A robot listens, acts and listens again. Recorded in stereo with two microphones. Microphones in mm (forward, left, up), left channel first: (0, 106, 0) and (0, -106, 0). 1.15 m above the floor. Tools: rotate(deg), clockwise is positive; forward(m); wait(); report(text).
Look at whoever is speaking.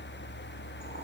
wait()
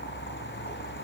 wait()
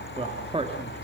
rotate(25)
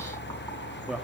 report("Found it: a man speaking, straight ahead, 2 to 4 m away.")